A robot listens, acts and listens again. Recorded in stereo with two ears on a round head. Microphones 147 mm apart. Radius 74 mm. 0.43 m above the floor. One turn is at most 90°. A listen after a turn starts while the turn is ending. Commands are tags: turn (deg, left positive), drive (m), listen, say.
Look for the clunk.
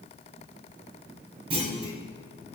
<turn deg="-35"/>
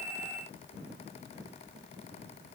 <listen/>
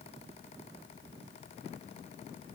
<say>I heard a clunk, but can't make it out now. It was about straight ahead or 110° right.</say>